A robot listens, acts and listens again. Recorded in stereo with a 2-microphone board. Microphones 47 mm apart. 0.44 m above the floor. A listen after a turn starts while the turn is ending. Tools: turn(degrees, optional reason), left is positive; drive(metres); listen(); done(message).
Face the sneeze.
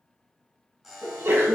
turn(degrees=-55, reason="The sneeze: about 55° right or 125° right.")
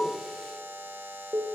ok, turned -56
listen()
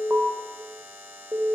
done("I heard a sneeze, but can't make it out now. It was about 5° left or 70° right.")